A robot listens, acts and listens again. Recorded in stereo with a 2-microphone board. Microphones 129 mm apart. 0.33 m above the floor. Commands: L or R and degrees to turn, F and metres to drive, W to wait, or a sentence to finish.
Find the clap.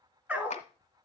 L65
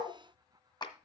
L40
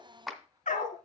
Found it: a clap, straight ahead, 1 to 2 m away.